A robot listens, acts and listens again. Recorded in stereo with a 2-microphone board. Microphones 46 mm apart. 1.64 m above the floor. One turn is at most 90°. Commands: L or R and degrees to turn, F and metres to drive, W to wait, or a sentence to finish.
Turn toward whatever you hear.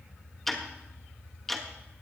L30
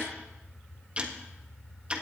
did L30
R25
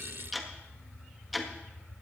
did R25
Found it: ticking, straight ahead.